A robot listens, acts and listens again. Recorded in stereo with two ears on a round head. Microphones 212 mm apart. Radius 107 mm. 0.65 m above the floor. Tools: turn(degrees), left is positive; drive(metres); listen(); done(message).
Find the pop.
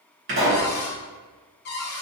turn(degrees=-45)
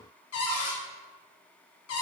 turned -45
listen()
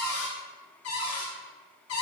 done("I heard a pop, but can't make it out now. It was about straight ahead or 90° right.")